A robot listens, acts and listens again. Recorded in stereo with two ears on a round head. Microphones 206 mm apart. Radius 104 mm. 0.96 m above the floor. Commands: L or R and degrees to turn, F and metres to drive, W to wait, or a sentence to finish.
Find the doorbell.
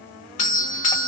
L35
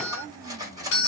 L110
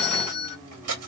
L55
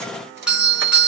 Facing the doorbell.